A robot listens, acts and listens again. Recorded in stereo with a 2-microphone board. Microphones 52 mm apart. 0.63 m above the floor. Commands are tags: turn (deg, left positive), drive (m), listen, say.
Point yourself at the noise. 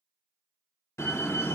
<turn deg="60"/>
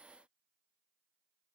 <listen/>
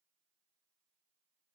<say>I heard a door slam, but can't make it out now. It was about straight ahead or 60° left.</say>